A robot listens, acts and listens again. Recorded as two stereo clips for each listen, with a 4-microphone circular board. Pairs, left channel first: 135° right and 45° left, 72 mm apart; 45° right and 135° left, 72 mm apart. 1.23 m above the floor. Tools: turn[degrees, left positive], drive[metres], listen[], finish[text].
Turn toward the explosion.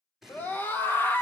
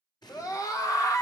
Thought: The explosion: 40° right.
Action: turn[-40]
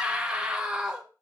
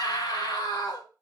Action: finish[I heard an explosion from this way, but can't make it out now.]